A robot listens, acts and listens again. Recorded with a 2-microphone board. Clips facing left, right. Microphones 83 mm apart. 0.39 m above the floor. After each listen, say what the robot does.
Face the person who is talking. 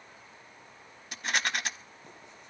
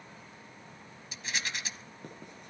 Keep listening.
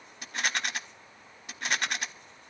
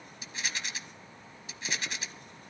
Keep listening.
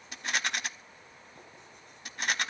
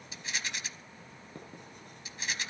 I can't make out anyone speaking, only writing and a rattle.